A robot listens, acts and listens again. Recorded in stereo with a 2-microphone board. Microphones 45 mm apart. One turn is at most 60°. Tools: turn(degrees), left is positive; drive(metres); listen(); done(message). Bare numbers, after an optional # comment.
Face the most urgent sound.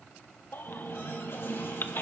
# The baby crying: about 50° left or 130° left.
turn(50)
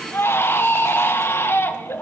# So it is at 75° left.
turn(60)
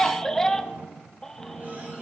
# The baby crying is now 15° left.
turn(15)
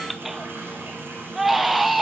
done("Facing the baby crying, under 1 m away.")